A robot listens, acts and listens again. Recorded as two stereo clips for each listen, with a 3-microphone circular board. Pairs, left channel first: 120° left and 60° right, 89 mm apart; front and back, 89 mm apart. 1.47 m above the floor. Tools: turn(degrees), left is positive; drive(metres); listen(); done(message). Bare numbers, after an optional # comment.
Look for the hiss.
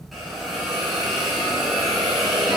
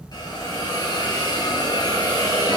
# The hiss: 25° left.
turn(25)
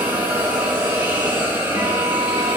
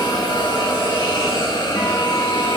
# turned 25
done("Found it: a hiss, straight ahead, 2 to 4 m away.")